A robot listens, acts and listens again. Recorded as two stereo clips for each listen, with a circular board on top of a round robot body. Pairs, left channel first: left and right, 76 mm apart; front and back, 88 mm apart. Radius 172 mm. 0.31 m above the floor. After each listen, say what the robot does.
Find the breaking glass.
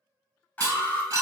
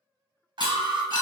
Turn 45° right.
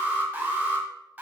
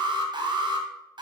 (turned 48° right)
I heard breaking glass from this way, but can't make it out now.